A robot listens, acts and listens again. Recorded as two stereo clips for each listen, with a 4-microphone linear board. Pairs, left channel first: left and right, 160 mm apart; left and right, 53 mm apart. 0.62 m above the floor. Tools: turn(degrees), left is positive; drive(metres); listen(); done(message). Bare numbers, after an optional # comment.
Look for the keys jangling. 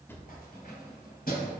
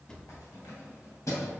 # The keys jangling: about 70° left or 110° left.
turn(70)
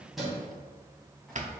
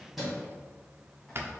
done("Facing the keys jangling, 2 to 4 m away.")